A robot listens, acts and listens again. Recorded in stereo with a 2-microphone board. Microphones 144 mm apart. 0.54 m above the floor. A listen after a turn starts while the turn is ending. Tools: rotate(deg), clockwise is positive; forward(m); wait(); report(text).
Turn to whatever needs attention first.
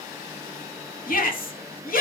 rotate(-65)
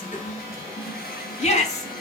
rotate(-45)
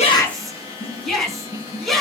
report("Facing the shout, over 4 m away.")